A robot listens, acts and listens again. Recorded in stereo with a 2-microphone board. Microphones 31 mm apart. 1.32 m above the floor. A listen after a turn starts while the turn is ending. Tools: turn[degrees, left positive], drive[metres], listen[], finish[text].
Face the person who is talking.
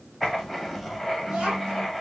Thought: The child speaking: about 35° right or 145° right.
Action: turn[-35]
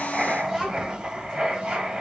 Thought: The child speaking: about 35° right or 145° right.
Action: turn[-35]
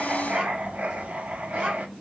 Thought: The child speaking: about 40° right or 140° right.
Action: turn[-40]
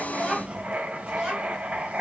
Thought: So it is at 15° right.
Action: turn[-15]
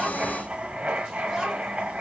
Action: finish[Found it: a child speaking, straight ahead.]